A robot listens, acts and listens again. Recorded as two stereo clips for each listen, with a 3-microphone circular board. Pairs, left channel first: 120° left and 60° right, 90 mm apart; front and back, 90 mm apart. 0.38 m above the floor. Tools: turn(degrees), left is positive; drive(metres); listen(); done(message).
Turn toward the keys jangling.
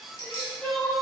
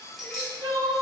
turn(degrees=85)
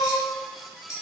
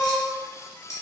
turn(degrees=-45)
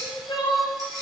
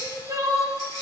turn(degrees=-20)
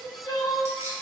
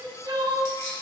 turn(degrees=-10)
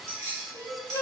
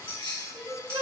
turn(degrees=-10)
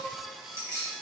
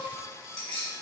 done("Found it: keys jangling, straight ahead.")